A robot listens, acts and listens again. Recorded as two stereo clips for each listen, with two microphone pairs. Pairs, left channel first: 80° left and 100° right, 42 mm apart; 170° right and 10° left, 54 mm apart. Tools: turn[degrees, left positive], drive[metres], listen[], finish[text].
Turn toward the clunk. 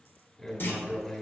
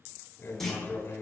Thought: The clunk: 105° left.
Action: turn[105]
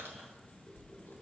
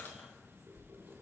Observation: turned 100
Action: finish[Facing where the clunk came from. I can't hear it now.]